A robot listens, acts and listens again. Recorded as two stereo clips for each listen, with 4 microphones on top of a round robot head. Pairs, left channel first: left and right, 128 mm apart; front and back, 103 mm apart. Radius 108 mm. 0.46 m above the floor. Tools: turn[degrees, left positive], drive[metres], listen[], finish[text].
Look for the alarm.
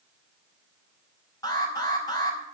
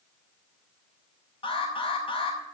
Thought: The alarm: 30° left.
Action: turn[30]
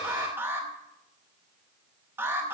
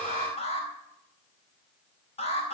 Thought: The alarm is now 15° right.
Action: turn[-15]
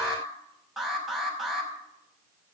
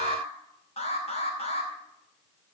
Action: finish[Found it: an alarm, straight ahead.]